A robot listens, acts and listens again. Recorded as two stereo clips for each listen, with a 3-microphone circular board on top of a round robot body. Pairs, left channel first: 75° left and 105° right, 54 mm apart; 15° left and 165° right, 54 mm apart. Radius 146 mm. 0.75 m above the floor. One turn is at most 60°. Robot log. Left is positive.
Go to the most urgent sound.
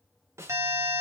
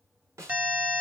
note: The alarm: 100° right.
cmd yaw -60
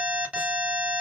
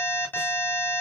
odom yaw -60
note: The alarm is now 35° right.
cmd yaw -35
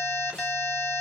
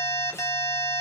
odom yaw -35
cmd fwd 1.0
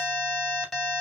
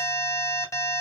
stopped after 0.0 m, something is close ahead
note: The alarm is now 10° right.
cmd yaw -10
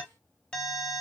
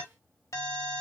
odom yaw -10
end: Blocked. The alarm is further on, straight ahead.